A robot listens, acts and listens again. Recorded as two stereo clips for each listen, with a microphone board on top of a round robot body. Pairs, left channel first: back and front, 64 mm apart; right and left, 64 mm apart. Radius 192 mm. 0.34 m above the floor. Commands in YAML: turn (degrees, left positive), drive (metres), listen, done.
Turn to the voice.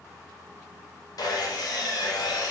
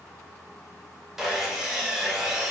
listen: true
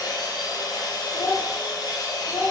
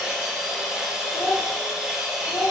turn: -140
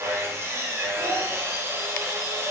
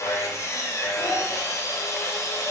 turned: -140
listen: true
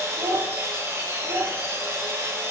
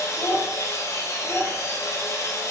done: "Facing the child speaking, 1 to 2 m away."